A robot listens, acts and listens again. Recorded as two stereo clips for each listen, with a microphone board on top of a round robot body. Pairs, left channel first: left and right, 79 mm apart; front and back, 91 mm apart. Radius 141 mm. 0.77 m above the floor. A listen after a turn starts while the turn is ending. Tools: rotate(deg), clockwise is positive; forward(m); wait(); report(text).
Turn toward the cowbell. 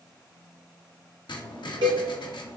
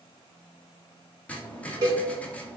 rotate(130)
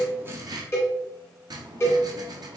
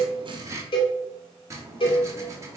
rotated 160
rotate(-35)
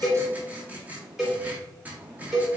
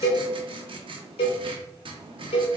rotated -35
report("Facing the cowbell, under 1 m away.")